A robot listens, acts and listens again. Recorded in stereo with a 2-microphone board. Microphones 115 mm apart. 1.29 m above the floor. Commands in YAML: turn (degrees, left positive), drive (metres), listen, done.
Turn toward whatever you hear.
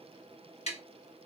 turn: 70
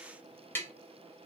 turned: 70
turn: 20
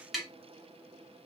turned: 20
done: "Facing the tapping."